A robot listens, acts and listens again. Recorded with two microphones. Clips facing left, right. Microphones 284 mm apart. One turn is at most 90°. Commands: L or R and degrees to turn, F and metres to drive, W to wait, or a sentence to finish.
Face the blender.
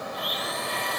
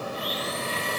R35
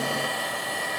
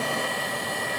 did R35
Facing the blender.